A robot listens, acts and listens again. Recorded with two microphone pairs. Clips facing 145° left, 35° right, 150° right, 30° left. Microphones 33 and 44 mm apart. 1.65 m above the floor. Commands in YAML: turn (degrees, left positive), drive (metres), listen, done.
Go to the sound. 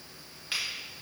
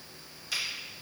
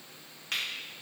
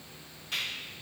turn: -165
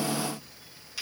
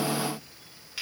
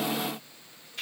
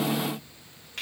turn: 30
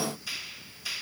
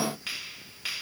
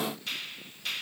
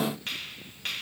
turn: -10
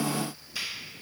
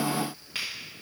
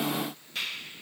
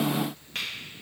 drive: 1.0
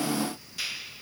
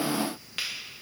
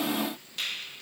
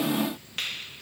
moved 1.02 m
turn: -10
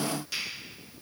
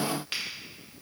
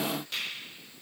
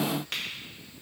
drive: 1.0
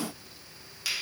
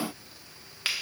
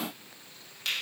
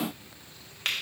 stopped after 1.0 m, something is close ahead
done: "Arrived at the finger snap, straight ahead."